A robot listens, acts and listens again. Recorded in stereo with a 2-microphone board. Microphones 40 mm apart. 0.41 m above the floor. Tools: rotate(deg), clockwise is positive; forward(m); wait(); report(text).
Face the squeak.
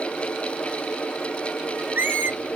rotate(55)
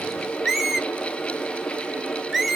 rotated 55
report("Found it: a squeak, straight ahead.")